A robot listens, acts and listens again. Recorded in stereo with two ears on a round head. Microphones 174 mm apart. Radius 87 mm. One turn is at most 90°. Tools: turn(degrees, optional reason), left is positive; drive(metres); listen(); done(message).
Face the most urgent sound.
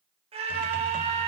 turn(degrees=-30, reason="The scream: about 30° right or 150° right.")
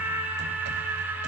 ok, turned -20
turn(degrees=-10, reason="So it is at 10° right.")
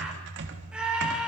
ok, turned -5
done("Facing the scream.")